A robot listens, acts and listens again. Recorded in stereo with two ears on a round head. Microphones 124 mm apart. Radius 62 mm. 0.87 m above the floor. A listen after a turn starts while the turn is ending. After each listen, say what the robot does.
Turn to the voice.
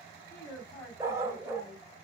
Turn 30° left.
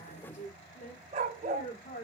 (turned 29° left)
Turn 110° left.
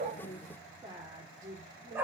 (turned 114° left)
Turn 30° right.
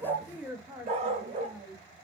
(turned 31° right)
Turn 10° right.
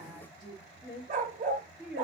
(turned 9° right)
Facing the woman speaking, 2 to 4 m away.